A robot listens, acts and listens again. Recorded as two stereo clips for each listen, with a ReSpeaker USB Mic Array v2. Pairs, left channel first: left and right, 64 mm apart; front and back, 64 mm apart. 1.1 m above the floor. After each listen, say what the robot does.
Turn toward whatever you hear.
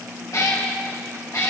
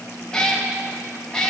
Turn 75° left.
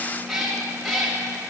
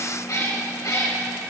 Facing the cat meowing, 2 to 4 m away.